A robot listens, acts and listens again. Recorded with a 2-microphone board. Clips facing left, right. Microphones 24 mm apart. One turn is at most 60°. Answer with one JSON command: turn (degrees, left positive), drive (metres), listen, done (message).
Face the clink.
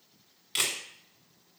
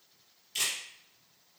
{"listen": true}
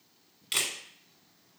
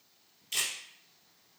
{"listen": true}
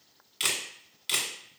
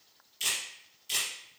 {"done": "I can't make out a clink, only a camera shutter."}